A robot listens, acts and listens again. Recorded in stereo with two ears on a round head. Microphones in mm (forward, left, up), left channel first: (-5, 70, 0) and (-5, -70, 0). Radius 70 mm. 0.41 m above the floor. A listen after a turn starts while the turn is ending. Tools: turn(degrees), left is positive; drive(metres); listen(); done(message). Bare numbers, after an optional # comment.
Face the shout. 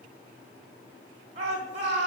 # The shout: about 45° right or 135° right.
turn(-45)
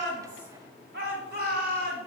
# So it is at 85° right.
turn(-85)
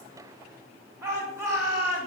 # The shout is now 20° right.
turn(-20)
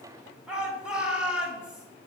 done("Facing the shout.")